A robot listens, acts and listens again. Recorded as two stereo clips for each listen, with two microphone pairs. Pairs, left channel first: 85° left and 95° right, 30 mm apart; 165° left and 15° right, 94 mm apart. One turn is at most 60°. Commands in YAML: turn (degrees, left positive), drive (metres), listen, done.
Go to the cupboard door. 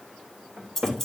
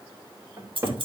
turn: -60
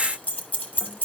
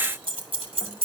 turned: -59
turn: -15
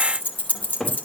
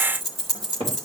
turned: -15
drive: 1.0
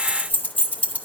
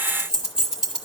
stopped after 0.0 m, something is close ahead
listen: true
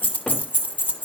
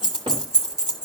listen: true
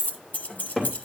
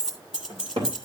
done: "Blocked. The cupboard door is further on, straight ahead."